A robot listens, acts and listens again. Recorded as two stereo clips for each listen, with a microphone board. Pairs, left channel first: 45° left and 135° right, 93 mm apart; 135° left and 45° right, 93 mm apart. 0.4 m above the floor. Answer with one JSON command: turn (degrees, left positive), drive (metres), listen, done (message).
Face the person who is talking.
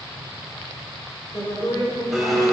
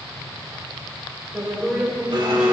{"turn": 40}
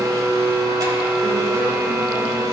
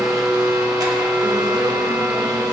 {"listen": true}
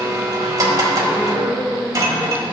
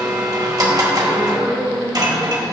{"turn": -70}
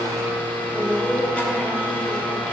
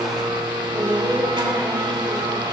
{"turn": -20}
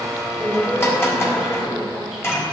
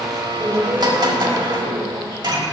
{"done": "Found it: a woman speaking, straight ahead, 1 to 2 m away."}